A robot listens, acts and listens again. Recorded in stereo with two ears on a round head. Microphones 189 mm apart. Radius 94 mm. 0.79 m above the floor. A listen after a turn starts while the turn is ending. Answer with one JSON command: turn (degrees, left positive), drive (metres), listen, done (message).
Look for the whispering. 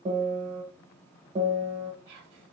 {"turn": -60}
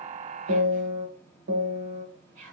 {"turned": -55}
{"turn": -40}
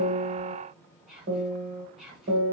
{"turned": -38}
{"done": "Facing the whispering, 1 to 2 m away."}